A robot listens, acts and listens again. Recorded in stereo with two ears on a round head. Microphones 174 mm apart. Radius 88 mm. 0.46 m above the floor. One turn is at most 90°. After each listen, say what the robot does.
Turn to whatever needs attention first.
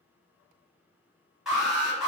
Turn 30° left.
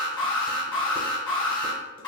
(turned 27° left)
Turn 90° left.
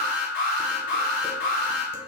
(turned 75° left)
Turn 80° left.
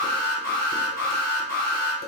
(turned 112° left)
Turn 35° right.
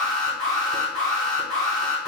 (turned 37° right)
Facing the alarm, 1 to 2 m away.